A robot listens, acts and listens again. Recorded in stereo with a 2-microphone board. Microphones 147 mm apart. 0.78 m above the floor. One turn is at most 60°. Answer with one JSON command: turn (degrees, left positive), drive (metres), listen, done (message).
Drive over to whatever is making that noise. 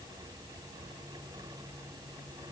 {"listen": true}
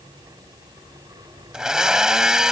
{"turn": -30}
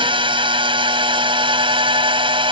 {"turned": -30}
{"turn": -60}
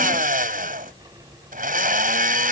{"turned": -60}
{"turn": -60}
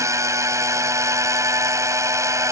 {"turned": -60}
{"turn": -20}
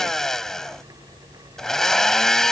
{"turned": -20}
{"drive": 1.0}
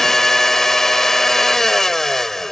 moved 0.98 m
{"drive": 1.0}
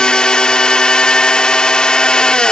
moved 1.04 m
{"drive": 1.0}
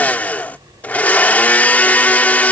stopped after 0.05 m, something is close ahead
{"turn": 10}
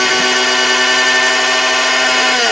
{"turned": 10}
{"done": "Arrived at the blender, straight ahead."}